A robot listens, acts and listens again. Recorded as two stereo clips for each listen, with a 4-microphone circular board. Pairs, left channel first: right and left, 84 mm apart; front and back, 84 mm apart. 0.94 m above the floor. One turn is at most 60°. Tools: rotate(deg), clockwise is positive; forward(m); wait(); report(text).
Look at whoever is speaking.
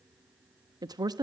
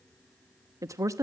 rotate(-60)
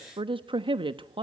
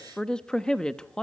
rotate(-60)
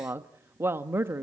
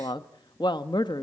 rotate(-30)
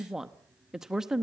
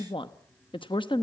report("Facing the woman speaking.")